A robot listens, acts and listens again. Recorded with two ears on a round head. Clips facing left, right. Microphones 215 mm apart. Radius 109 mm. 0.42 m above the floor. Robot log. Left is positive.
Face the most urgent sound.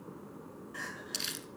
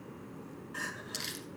cmd yaw -30
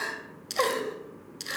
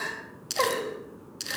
note: So it is at 25° left.
cmd yaw +25
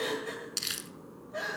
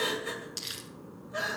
note: The crying is now 15° right.
cmd yaw -15
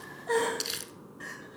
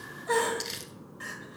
note: The crying is now 10° right.
cmd yaw -10
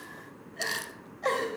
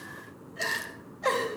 end: Facing the crying, 2 to 4 m away.